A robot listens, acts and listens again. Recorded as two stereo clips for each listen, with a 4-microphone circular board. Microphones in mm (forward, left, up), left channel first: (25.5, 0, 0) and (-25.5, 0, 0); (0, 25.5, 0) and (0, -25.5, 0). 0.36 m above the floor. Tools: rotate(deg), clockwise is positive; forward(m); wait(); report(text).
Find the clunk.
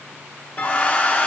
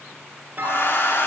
rotate(60)
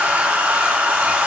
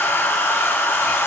report("I heard a clunk from this way, but can't make it out now.")